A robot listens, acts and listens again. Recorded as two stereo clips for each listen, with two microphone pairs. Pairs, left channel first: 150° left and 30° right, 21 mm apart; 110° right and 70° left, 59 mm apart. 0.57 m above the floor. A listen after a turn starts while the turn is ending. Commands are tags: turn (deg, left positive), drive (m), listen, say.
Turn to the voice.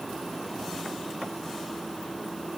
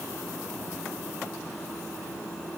<listen/>
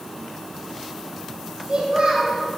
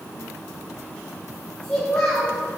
<turn deg="-35"/>
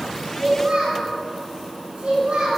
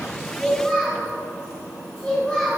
<turn deg="-20"/>
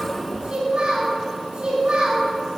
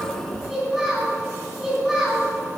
<say>Facing the child speaking.</say>